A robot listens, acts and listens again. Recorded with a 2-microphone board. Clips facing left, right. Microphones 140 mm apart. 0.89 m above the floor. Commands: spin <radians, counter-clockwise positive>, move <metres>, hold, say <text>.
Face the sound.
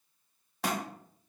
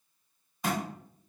spin 1.57
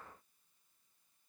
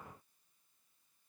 say Facing where the thud came from. I can't hear it now.